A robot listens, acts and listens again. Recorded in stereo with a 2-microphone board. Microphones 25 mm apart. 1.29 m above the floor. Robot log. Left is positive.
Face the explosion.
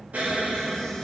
cmd yaw -90
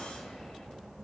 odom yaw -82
note: Nothing new. It was at 10° right.
cmd yaw -10
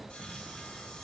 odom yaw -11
end: Facing where the explosion came from. I can't hear it now.